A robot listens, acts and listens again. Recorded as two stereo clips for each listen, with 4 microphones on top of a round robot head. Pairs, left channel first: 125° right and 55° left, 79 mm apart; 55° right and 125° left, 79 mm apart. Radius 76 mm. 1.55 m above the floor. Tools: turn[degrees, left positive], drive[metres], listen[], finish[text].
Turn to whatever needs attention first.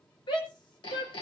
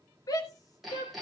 Thought: The shout: 100° right.
Action: turn[-100]
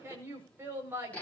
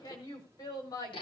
Thought: The shout is now 10° right.
Action: turn[-10]
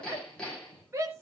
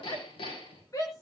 Action: finish[Found it: a shout, straight ahead.]